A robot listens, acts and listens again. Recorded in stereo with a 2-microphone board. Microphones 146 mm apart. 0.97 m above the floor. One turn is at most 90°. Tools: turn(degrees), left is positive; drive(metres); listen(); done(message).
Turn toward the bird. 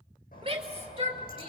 listen()
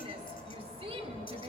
turn(degrees=90)
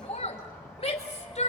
listen()
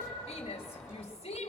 done("Facing the bird, over 4 m away.")